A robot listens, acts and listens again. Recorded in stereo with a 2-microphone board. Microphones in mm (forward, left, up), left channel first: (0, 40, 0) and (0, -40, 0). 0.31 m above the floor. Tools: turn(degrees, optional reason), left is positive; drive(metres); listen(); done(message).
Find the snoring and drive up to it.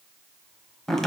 listen()
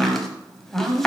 listen()
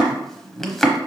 done("I can't make out snoring, only chopping.")